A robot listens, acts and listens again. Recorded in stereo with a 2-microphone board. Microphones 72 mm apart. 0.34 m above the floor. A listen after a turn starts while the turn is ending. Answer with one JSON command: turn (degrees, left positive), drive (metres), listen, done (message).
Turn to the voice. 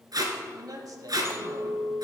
{"turn": -55}
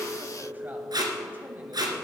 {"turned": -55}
{"listen": true}
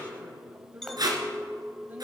{"listen": true}
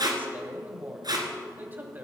{"turn": -30}
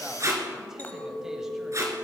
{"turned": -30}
{"listen": true}
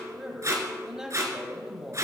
{"turn": -10}
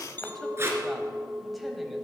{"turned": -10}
{"listen": true}
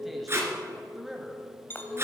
{"done": "Found it: a man speaking, straight ahead."}